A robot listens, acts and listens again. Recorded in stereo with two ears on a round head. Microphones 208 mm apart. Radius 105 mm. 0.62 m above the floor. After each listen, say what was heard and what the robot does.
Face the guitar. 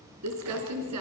Keep listening.
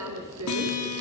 Turn 90° left.
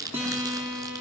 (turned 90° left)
So it is at 10° right. Turn 10° right.
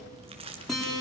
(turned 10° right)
Found it: a guitar, straight ahead, over 4 m away.